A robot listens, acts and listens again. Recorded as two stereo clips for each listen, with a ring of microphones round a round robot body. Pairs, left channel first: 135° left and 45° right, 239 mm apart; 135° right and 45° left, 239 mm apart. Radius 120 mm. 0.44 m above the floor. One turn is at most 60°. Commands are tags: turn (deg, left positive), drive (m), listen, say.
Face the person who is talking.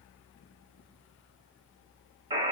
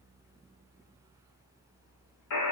<listen/>
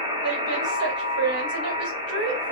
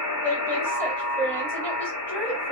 <turn deg="-55"/>
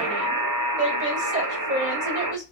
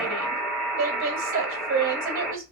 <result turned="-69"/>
<turn deg="15"/>
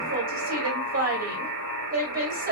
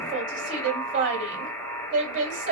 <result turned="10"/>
<say>Found it: a woman speaking, straight ahead, 1 to 2 m away.</say>